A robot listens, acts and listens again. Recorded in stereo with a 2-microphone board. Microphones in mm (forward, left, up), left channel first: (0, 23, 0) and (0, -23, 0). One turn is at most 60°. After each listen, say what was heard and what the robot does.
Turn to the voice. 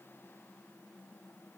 Keep listening.
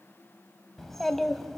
Turn 30° left.
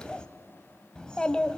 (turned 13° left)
So it is at 160° left. Turn 60° left.
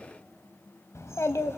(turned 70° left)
The child speaking is now 90° left. Turn 60° left.
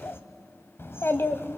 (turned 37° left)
The child speaking is now 55° left. Turn 55° left.
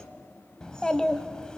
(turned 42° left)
The child speaking is now 15° left. Turn 15° left.
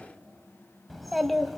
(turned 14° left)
Found it: a child speaking, straight ahead.